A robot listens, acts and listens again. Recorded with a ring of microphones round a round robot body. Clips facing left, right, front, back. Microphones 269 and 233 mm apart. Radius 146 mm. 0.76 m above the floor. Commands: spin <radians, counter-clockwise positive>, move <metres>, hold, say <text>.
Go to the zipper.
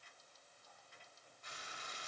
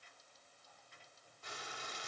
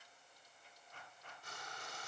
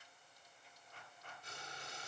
hold
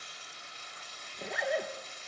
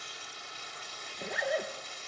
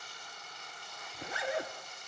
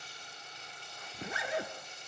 spin 3.14
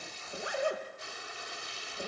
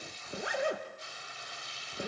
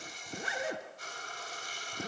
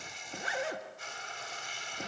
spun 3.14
spin -0.35
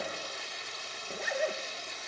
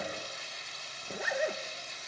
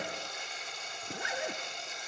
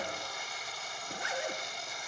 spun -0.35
move 1.0
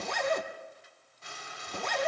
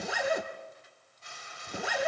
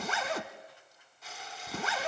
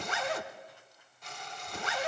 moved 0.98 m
move 1.0
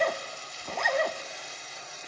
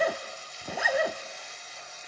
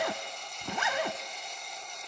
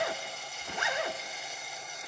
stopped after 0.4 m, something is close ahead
spin -0.17
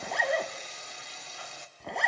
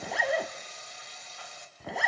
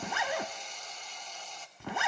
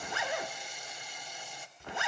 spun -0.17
say Arrived at the zipper, straight ahead.